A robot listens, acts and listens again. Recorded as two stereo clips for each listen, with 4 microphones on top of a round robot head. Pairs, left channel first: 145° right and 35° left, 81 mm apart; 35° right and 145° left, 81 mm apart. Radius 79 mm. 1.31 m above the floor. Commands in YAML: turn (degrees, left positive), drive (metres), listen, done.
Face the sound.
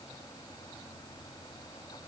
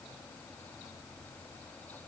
listen: true
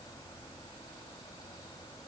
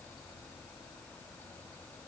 listen: true
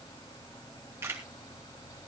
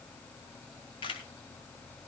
turn: -25
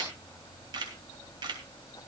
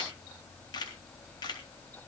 done: "Found it: a camera shutter, straight ahead, 2 to 4 m away."